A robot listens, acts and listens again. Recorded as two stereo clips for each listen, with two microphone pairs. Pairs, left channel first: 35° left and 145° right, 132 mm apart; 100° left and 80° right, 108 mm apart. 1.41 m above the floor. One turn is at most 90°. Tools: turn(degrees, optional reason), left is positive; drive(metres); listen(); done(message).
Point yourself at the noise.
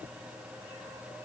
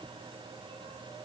listen()
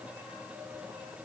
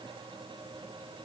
listen()
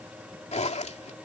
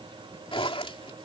turn(degrees=70, reason="The zipper: 70° left.")
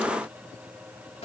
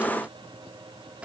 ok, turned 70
done("Facing the zipper.")